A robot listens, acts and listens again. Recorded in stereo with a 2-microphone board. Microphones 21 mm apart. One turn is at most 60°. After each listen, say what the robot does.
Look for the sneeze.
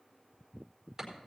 Keep listening.
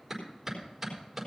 Keep listening.
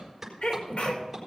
Turn 60° left.
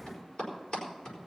Turn 30° left.
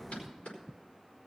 I heard a sneeze from this way, but can't make it out now.